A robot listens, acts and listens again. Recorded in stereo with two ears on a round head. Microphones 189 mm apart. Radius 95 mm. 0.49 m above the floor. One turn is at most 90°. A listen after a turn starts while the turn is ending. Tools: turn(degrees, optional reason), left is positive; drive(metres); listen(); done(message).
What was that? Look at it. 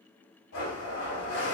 turn(degrees=90)
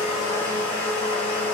done("Facing the blender.")